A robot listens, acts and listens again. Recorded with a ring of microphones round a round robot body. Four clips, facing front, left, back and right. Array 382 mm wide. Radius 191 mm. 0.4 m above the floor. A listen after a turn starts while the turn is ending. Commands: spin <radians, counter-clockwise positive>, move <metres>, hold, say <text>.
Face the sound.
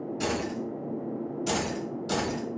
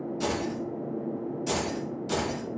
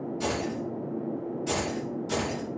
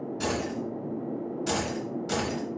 spin -0.26
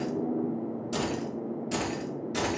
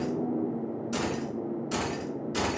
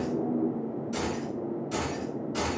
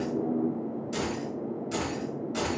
spin 0.79
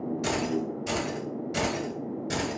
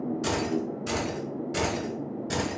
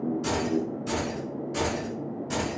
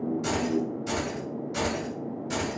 spin 0.79
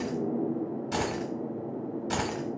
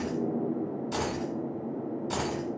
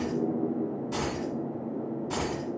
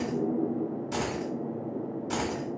say Facing the keys jangling, 1 to 2 m away.